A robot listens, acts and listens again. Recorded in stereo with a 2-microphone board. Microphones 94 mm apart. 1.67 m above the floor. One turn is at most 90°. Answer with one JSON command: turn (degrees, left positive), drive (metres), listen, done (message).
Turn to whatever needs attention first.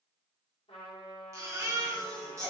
{"turn": -35}
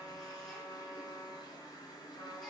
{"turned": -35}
{"listen": true}
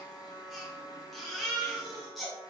{"done": "Facing the baby crying, 1 to 2 m away."}